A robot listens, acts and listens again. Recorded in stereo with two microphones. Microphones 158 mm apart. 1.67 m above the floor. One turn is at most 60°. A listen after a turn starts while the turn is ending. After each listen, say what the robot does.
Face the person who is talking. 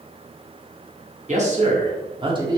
Turn 25° right.
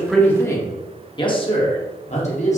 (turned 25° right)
Turn 50° left.
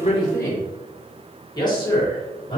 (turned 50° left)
Turn 30° left.
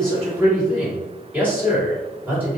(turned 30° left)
Turn 10° right.
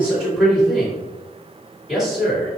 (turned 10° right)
Found it: a man speaking, straight ahead.